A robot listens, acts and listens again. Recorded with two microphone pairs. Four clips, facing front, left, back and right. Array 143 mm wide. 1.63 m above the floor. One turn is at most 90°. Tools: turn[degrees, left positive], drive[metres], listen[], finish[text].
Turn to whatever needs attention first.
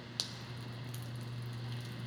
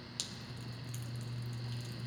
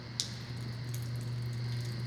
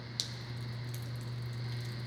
Action: listen[]
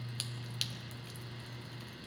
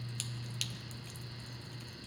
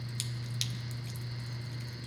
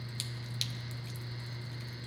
Action: listen[]
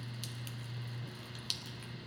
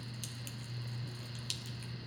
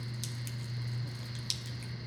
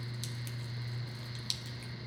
Action: finish[I can't make out anything urgent, only dripping.]